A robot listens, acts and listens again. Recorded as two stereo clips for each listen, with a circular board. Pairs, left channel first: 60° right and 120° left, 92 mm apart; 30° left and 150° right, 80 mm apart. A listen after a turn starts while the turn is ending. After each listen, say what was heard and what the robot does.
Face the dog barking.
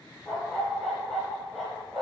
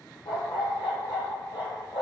The dog barking: 25° left. Turn 25° left.
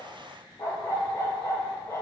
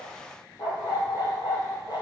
Found it: a dog barking, straight ahead, 2 to 4 m away.